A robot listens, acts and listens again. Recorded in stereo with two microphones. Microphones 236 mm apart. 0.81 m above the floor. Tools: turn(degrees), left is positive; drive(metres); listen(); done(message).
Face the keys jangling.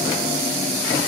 listen()
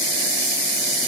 listen()
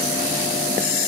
done("I can't make out keys jangling.")